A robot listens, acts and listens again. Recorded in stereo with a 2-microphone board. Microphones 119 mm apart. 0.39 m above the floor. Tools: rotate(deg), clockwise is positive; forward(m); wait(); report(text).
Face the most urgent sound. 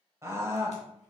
rotate(25)
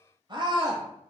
rotate(130)
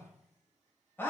rotate(-20)
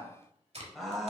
report("Facing the scream, 1 to 2 m away.")